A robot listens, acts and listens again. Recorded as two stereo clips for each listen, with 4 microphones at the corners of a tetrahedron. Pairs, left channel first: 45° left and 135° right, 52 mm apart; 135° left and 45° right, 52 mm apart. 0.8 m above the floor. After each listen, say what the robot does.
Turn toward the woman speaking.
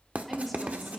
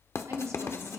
Turn 40° right.
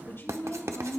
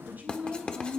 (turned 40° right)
Turn 10° left.
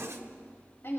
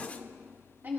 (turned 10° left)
Facing the woman speaking, over 4 m away.